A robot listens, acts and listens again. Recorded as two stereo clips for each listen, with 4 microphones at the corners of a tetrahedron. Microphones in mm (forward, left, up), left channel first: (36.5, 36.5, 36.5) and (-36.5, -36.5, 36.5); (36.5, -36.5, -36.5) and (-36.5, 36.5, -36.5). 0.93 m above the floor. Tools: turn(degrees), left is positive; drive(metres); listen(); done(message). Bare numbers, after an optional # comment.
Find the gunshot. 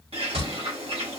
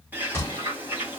# The gunshot: 115° right.
turn(-115)
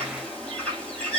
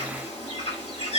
done("I heard a gunshot from this way, but can't make it out now.")